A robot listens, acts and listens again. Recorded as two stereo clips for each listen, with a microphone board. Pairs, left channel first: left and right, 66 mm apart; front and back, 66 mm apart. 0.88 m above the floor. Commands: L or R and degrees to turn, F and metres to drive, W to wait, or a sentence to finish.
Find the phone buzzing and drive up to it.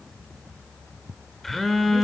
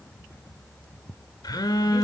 F1.0
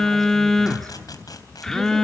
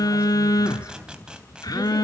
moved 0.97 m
L10
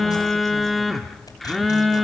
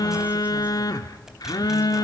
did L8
F1.0
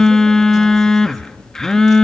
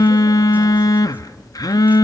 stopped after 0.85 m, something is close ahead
L10
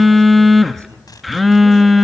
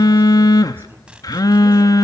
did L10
Arrived at the phone buzzing, straight ahead.